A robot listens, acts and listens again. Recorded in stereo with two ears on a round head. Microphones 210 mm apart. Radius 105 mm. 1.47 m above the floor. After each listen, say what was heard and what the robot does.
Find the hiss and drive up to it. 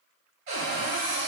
Keep listening.
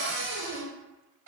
Keep listening.
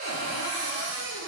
I can't make out a hiss to turn to.